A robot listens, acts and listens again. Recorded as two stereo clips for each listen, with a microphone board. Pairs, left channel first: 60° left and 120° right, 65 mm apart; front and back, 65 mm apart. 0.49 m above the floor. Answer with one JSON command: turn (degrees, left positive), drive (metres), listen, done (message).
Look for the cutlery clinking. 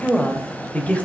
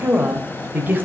{"listen": true}
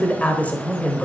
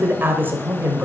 {"listen": true}
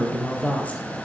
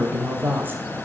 {"done": "I can't make out cutlery clinking to turn to."}